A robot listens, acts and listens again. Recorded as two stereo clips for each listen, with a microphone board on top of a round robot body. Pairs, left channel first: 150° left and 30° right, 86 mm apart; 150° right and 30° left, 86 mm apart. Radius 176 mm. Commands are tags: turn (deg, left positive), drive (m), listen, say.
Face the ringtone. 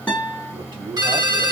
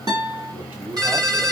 <say>Facing the ringtone, 1 to 2 m away.</say>